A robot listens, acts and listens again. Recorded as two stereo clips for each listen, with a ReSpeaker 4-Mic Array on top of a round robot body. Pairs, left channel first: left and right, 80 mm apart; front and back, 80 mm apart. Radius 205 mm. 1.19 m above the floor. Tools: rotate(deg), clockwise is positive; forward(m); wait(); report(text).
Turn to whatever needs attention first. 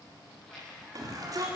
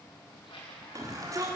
rotate(135)
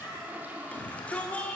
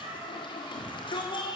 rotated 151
rotate(-15)
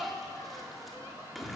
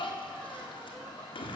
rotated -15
report("Found it: a shout, straight ahead.")